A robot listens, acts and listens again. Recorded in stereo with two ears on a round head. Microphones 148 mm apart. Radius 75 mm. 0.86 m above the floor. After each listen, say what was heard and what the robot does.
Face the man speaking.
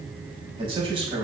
The man speaking: about 30° right or 150° right. Turn 30° right.
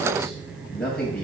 Facing the man speaking, over 4 m away.